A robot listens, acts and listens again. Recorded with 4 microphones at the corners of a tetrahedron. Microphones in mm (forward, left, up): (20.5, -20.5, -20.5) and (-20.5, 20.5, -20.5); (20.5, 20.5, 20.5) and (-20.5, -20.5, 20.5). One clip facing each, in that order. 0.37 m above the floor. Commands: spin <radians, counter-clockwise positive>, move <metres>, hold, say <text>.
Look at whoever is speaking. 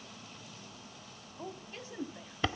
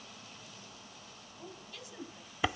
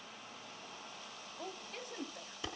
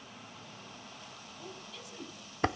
say Facing the woman speaking.